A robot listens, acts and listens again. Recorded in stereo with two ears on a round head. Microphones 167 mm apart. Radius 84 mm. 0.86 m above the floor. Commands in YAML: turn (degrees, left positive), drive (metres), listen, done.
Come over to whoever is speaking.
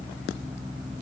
listen: true
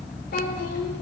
turn: 55
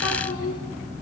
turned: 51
turn: 75
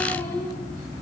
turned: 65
turn: 10
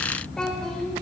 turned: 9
drive: 1.0
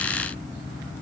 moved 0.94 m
listen: true
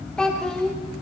drive: 1.0
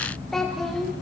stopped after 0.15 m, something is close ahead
done: "I am next to the child speaking."